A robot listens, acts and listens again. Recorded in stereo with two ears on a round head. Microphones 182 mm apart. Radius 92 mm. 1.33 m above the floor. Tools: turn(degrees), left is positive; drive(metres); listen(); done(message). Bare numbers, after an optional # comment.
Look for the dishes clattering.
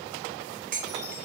# The dishes clattering: about 45° right or 135° right.
turn(-45)
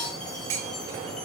# So it is at 85° right.
turn(-85)
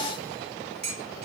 # The dishes clattering is now 30° right.
turn(-30)
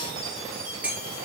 done("Found it: dishes clattering, straight ahead, 1 to 2 m away.")